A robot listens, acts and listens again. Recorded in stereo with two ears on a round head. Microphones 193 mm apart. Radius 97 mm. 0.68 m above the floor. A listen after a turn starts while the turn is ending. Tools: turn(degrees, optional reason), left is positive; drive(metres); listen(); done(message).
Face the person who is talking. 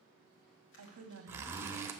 turn(degrees=-65, reason="The woman speaking: about 65° right or 115° right.")
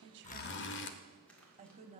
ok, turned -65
turn(degrees=-30, reason="So it is at 30° right.")
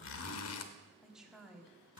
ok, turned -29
done("Found it: a woman speaking, straight ahead.")